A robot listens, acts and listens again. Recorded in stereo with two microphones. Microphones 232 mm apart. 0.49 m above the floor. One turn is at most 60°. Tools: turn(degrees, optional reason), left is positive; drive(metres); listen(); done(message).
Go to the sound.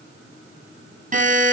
turn(degrees=-35, reason="The buzzer: about 35° right or 145° right.")
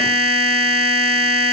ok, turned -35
turn(degrees=-60, reason="So it is at 110° right.")
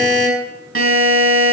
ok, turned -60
turn(degrees=-60, reason="The buzzer is now 75° right.")
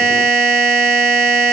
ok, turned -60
drive(metres=1.0)
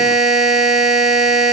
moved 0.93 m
drive(metres=1.0)
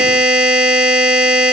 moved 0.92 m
drive(metres=1.0)
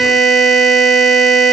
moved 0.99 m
drive(metres=1.0)
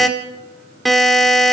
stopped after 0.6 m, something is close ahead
done("I am next to the buzzer.")